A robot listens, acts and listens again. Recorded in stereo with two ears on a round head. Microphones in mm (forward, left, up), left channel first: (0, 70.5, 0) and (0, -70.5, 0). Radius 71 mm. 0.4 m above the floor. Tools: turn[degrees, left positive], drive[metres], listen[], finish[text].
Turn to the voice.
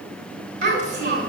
Thought: The child speaking: about 50° right or 130° right.
Action: turn[-50]
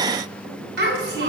Thought: So it is at 75° right.
Action: turn[-75]
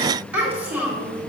Thought: The child speaking is now 10° right.
Action: turn[-10]
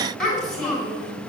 Action: finish[Found it: a child speaking, straight ahead, 2 to 4 m away.]